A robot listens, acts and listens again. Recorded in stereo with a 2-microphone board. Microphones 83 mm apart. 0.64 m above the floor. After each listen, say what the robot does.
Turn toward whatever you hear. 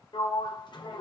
Turn 90° left.
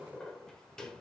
Facing the sliding door, 1 to 2 m away.